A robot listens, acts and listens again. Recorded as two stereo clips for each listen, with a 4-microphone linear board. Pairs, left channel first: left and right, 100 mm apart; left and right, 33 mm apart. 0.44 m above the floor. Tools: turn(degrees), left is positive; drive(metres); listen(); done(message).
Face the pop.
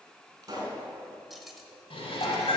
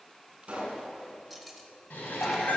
turn(degrees=-40)
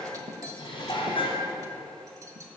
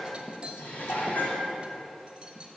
listen()
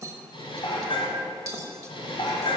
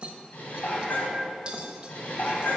done("I heard a pop, but can't make it out now. It was about straight ahead or 100° right.")